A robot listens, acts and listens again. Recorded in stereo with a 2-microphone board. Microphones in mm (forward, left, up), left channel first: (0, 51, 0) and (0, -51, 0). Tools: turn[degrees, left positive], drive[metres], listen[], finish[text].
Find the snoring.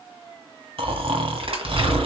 Thought: The snoring: about 65° right or 115° right.
Action: turn[-65]
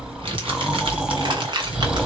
Thought: So it is at 10° right.
Action: turn[-10]
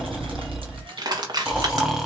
Action: finish[Found it: snoring, straight ahead.]